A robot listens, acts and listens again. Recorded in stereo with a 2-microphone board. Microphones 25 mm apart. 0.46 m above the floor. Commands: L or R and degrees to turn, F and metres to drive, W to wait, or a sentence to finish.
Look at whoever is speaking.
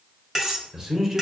R20
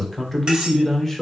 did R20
Found it: a man speaking, straight ahead.